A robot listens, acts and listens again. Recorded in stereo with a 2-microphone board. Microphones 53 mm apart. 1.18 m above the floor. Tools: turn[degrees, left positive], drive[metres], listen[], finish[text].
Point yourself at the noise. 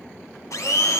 Action: turn[90]
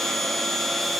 Action: finish[Found it: a blender, straight ahead, 1 to 2 m away.]